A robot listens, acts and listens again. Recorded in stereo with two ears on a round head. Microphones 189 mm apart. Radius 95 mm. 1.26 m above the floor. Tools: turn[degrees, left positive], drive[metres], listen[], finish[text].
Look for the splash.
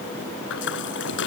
Thought: The splash: about 65° left or 115° left.
Action: turn[65]
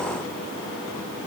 Action: listen[]
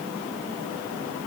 Action: finish[I heard a splash, but can't make it out now. It was about straight ahead or 50° left.]